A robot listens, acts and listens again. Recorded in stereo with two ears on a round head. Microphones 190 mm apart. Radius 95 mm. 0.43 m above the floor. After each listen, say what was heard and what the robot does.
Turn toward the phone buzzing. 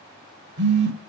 The phone buzzing: about 60° right or 120° right. Turn 60° right.
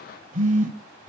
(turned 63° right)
So it is at 40° right. Turn 40° right.
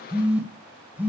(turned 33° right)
The phone buzzing is now 10° right. Turn 10° right.
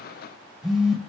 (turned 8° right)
Facing the phone buzzing, 1 to 2 m away.